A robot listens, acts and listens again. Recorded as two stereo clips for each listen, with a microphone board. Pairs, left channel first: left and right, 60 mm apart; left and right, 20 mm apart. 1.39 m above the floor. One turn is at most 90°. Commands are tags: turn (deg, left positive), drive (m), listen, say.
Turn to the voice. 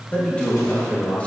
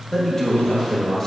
<turn deg="25"/>
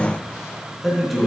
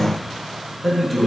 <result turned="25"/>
<say>Facing the man speaking.</say>